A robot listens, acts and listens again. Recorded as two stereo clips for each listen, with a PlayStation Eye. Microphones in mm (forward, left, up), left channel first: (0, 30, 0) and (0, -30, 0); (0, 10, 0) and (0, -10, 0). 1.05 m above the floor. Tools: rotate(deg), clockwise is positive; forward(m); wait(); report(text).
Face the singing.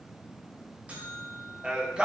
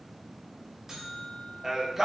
rotate(15)
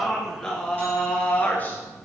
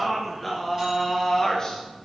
rotate(-30)
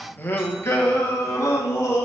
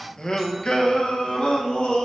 rotate(-60)
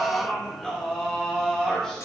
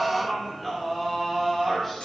rotate(-10)
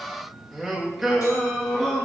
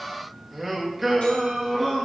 report("Facing the singing, 1 to 2 m away.")